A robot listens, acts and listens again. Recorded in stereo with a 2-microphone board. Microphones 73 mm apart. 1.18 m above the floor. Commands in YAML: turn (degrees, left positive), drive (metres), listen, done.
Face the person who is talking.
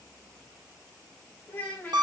turn: 20
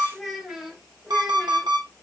done: "Found it: a child speaking, straight ahead."